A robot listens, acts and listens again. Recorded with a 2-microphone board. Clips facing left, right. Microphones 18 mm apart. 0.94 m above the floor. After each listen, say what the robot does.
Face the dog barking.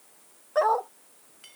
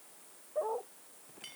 Turn 90° left.
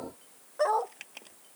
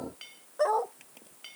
Turn 10° left.
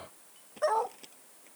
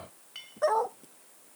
Found it: a dog barking, straight ahead.